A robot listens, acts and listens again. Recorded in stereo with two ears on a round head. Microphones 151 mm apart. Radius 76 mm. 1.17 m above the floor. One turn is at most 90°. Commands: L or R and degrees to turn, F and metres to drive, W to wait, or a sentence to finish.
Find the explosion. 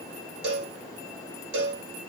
W
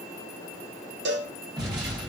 R25
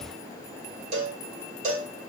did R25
W
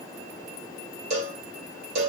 I heard an explosion, but can't make it out now. It was about straight ahead or 130° right.